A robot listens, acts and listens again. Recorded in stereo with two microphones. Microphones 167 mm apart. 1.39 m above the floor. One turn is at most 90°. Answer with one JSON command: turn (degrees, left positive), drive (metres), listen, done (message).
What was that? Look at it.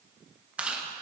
{"turn": -30}
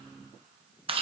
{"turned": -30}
{"turn": -90}
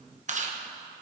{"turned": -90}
{"turn": -50}
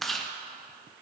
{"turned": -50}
{"done": "Facing the chewing, under 1 m away."}